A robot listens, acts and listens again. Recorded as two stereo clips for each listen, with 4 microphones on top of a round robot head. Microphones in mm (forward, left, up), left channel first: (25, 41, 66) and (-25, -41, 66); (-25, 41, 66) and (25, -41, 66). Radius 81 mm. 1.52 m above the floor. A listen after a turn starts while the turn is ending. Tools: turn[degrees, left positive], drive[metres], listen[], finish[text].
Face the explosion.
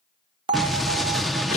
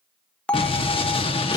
Thought: The explosion: 145° left.
Action: turn[145]
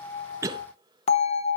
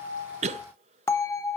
Action: finish[I heard an explosion from this way, but can't make it out now.]